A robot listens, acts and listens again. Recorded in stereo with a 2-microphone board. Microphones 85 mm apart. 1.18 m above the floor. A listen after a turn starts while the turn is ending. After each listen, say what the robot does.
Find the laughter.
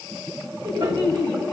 Turn 55° right.
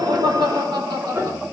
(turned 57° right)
Turn 60° right.
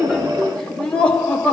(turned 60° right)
Turn 15° left.
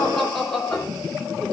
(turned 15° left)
Facing the laughter, 2 to 4 m away.